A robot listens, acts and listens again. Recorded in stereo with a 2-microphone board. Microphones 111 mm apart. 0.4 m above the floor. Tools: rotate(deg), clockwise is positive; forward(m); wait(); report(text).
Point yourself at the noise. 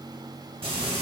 rotate(60)
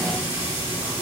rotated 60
rotate(25)
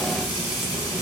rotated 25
report("Facing the frying.")